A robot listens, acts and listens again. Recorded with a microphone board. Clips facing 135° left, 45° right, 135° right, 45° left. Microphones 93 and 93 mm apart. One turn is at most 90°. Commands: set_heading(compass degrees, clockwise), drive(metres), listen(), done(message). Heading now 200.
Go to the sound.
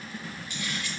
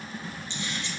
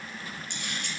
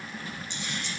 set_heading(290)
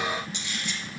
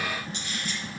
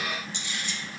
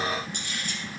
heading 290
drive(1.0)
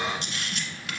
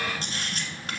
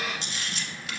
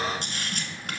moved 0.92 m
drive(1.0)
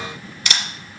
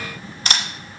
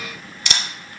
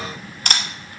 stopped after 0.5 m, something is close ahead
set_heading(280)
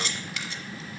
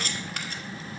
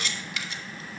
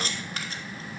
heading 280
done("Arrived at the camera shutter, straight ahead.")